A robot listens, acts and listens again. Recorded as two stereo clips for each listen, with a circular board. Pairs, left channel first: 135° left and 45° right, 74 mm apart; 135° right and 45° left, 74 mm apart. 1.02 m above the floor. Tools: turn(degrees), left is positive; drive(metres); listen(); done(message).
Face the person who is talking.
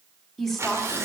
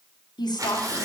turn(degrees=-140)
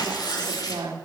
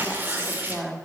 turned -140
turn(degrees=-35)
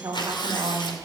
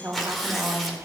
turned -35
turn(degrees=-10)
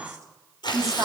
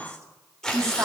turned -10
done("Facing the woman speaking, 2 to 4 m away.")